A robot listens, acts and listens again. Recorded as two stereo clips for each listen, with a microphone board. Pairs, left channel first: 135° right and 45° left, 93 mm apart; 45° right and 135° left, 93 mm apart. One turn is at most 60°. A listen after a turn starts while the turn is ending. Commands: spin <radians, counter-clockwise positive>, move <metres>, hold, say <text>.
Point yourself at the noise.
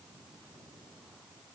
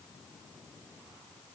hold
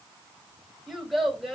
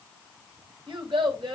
spin 1.05
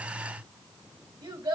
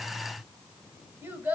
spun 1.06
spin 1.05
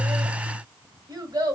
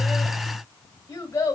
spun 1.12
spin 0.17
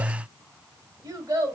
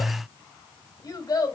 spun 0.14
say Facing the child speaking.